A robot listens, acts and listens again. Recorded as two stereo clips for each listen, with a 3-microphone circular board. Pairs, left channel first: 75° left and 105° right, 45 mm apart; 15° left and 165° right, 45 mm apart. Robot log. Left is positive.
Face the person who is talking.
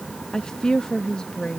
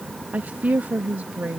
note: The woman speaking: 145° left.
cmd yaw +145
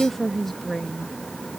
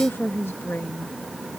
note: The woman speaking is now 10° right.
cmd yaw -10
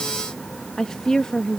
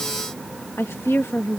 end: Found it: a woman speaking, straight ahead.